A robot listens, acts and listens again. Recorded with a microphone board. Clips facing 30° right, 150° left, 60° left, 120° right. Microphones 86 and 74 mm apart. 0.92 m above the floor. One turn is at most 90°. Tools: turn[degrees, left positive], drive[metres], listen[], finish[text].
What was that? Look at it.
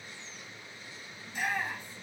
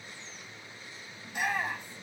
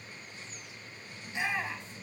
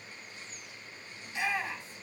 Thought: The shout: 130° left.
Action: turn[90]
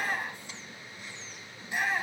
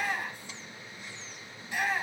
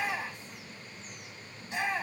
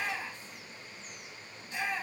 Thought: The shout is now 40° left.
Action: turn[40]
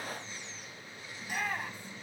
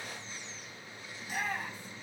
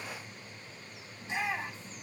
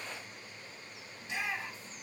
Action: finish[Found it: a shout, straight ahead.]